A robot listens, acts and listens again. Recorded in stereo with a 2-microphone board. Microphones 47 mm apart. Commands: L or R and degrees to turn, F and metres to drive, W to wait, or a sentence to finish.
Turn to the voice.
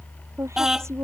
R90
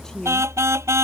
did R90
L10
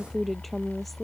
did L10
Found it: a woman speaking, straight ahead.